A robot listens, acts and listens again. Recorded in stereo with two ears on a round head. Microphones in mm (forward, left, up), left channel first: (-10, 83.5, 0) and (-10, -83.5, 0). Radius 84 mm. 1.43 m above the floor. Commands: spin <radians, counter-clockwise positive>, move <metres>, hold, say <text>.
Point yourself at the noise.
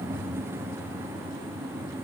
hold
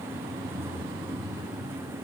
hold
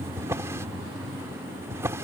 spin -0.26
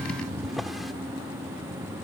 hold
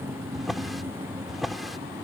say Facing the drawer.